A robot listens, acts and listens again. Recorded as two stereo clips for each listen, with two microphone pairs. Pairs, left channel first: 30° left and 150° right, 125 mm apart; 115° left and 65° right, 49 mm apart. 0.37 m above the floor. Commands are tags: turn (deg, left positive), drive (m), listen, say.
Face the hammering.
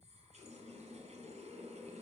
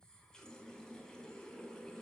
<listen/>
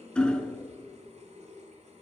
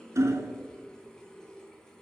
<turn deg="-55"/>
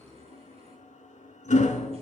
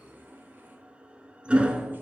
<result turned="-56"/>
<say>Found it: hammering, straight ahead.</say>